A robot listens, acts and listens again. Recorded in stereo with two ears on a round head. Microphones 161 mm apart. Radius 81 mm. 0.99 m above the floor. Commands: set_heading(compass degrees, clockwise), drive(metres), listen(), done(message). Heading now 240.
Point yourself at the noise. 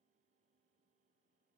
listen()
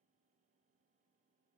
listen()
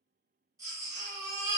set_heading(260)
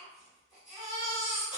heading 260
done("Found it: a baby crying, straight ahead.")